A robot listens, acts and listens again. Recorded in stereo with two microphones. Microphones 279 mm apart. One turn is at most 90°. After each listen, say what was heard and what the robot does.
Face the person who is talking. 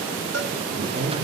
The woman speaking: about 45° right or 135° right. Turn 45° right.
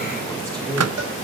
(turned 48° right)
Facing the woman speaking, over 4 m away.